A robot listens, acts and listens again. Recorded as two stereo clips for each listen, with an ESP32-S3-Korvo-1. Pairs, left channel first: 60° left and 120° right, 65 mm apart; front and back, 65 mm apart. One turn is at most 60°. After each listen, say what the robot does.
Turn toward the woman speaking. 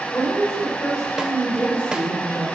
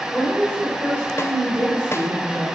Turn 60° left.
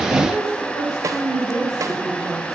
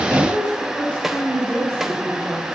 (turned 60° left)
Turn 60° left.
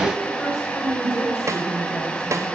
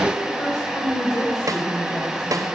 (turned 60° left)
Turn 20° left.
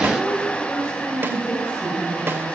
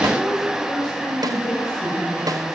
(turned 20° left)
Found it: a woman speaking, straight ahead.